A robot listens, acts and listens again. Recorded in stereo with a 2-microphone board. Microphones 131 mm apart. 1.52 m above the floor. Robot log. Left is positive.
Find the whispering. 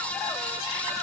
cmd idle
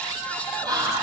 note: The whispering: about 30° right or 150° right.
cmd yaw -30
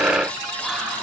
cmd idle
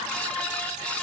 cmd idle
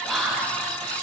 end: Facing the whispering, 1 to 2 m away.